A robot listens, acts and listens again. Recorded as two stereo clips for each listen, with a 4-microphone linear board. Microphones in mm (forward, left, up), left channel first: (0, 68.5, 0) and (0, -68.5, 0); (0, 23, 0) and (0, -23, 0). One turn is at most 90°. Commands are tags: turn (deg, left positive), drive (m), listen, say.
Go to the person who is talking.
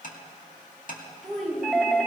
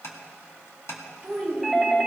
<turn deg="30"/>
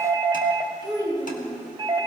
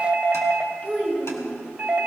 <turn deg="90"/>
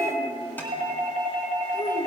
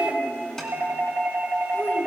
<turn deg="85"/>
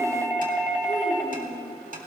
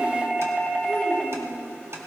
<drive m="1.0"/>
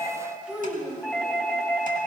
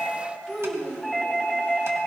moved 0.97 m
<turn deg="-10"/>
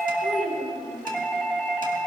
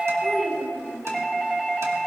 <drive m="1.0"/>
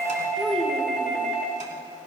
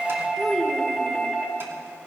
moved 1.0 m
<drive m="1.0"/>
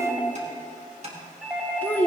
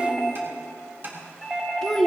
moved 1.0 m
<turn deg="10"/>
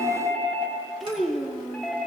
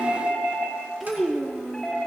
<drive m="1.0"/>
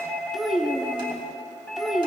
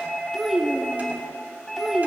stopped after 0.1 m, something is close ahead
<say>Arrived at the child speaking, straight ahead.</say>